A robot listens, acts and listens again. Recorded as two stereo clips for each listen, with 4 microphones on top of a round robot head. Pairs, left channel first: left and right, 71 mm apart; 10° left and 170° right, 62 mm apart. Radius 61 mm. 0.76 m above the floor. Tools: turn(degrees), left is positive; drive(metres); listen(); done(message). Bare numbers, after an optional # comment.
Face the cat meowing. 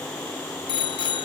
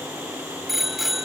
listen()
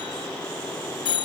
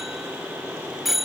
listen()
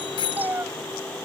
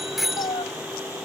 # The cat meowing: 25° right.
turn(-25)
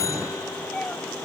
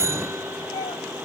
# The cat meowing is now 15° left.
turn(15)
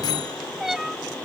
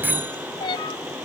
done("Found it: a cat meowing, straight ahead.")